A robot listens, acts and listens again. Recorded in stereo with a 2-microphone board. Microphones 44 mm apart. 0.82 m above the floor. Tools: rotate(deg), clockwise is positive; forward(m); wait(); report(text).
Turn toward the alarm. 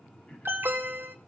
rotate(55)
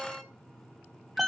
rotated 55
report("Found it: an alarm, straight ahead, 1 to 2 m away.")